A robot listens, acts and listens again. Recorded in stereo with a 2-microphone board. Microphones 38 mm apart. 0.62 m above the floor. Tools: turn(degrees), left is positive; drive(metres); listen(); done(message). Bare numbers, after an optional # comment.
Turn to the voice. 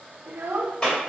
# The child speaking: about 60° right or 120° right.
turn(-60)
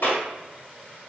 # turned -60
listen()
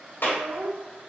# So it is at 60° right.
turn(-60)
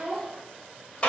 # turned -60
done("Facing the child speaking.")